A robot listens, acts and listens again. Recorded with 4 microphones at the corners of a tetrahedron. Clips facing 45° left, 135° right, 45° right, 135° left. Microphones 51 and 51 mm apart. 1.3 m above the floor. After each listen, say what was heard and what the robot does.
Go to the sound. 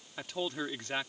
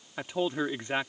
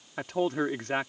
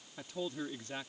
The man speaking: 65° right. Turn 65° right.
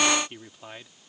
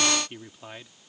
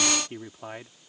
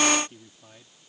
The man speaking is now 45° right. Turn 45° right.
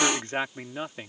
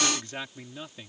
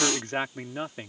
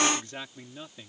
Drive 1.0 m forward.
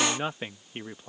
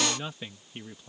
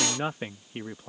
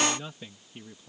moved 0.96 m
The man speaking is now 10° right. Turn 10° right.
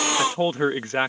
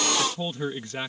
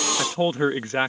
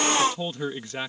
Drive 1.0 m forward.
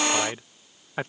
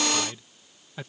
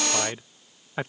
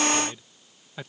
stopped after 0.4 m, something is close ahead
I am next to the man speaking.